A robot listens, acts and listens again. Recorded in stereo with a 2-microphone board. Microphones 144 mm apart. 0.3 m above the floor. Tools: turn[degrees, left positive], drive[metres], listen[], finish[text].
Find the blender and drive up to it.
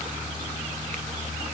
Action: listen[]
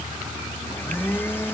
Action: turn[30]
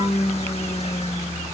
Thought: So it is at 135° left.
Action: turn[135]
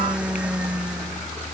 Action: drive[1.0]
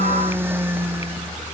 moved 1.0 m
Thought: The blender is now 15° right.
Action: turn[-15]
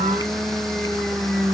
Action: drive[1.0]
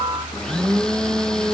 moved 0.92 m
Action: drive[1.0]
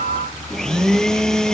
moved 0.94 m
Action: drive[1.0]
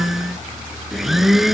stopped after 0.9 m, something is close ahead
Action: finish[Arrived at the blender, straight ahead.]